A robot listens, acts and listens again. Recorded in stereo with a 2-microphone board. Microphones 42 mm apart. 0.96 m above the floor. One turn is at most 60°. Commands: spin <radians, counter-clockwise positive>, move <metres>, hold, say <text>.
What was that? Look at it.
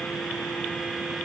hold
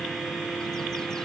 hold
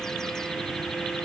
say I can't make out anything.